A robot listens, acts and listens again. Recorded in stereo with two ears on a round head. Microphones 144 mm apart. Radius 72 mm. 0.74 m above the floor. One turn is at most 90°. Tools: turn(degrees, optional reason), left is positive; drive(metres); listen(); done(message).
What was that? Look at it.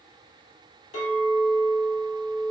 turn(degrees=45, reason="The clink: about 45° left or 135° left.")
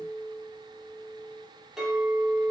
done("Facing the clink, 1 to 2 m away.")